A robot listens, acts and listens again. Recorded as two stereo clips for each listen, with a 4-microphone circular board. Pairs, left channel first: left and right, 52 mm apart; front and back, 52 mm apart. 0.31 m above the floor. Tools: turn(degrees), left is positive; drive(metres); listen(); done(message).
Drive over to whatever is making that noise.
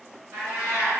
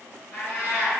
turn(degrees=-35)
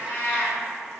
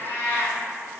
turn(degrees=15)
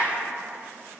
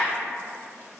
listen()
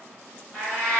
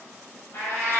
drive(metres=1.0)
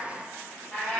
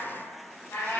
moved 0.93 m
drive(metres=1.0)
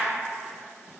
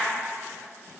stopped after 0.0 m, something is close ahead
listen()
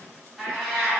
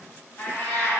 done("Arrived at the cat meowing, straight ahead.")